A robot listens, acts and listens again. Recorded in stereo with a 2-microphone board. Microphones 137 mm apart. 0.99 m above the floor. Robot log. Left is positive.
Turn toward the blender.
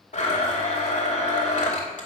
note: The blender: about 60° left or 120° left.
cmd yaw +60
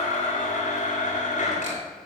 note: So it is at 65° left.
cmd yaw +65
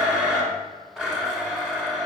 end: Found it: a blender, straight ahead, 2 to 4 m away.